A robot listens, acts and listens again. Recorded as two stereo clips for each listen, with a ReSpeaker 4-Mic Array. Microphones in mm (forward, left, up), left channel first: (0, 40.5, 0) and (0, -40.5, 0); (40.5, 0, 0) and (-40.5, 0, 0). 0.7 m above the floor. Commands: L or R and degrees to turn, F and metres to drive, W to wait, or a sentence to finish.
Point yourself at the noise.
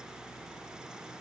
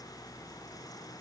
W
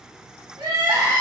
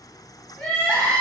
R75
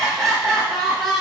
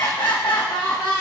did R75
Facing the crying.